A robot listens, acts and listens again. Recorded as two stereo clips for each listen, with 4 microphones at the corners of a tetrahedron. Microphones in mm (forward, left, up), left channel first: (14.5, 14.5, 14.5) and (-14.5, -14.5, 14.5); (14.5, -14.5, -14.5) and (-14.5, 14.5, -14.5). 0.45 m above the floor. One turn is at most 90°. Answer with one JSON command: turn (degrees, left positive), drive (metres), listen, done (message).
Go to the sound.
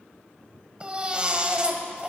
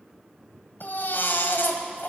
{"turn": -70}
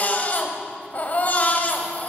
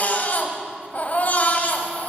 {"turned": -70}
{"drive": 1.0}
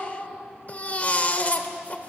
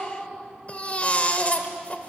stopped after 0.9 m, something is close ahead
{"done": "I am next to the baby crying."}